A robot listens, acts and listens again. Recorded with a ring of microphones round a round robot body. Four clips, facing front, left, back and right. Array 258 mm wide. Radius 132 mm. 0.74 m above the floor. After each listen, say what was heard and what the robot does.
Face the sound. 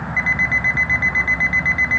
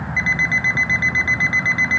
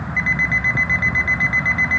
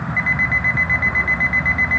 The alarm clock: 90° left. Turn 90° left.
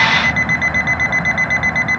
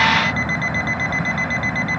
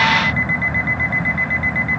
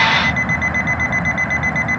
Found it: an alarm clock, straight ahead.